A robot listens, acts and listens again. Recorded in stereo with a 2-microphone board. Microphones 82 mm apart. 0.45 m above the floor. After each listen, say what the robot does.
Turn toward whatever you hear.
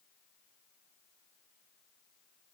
Keep listening.
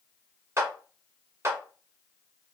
Turn 35° right.
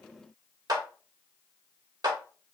Turn 100° right.
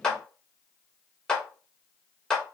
Turn 10° left.
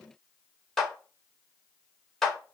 Turn 10° left.
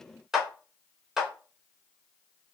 Found it: a clap, straight ahead.